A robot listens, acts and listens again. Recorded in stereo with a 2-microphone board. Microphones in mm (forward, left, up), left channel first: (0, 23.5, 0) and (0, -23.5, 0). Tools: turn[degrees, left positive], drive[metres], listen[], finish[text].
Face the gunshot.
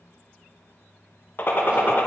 Thought: The gunshot: about 50° left or 130° left.
Action: turn[50]
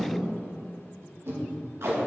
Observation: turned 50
Action: listen[]
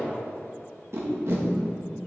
Action: finish[I heard a gunshot, but can't make it out now. It was about straight ahead or 80° left.]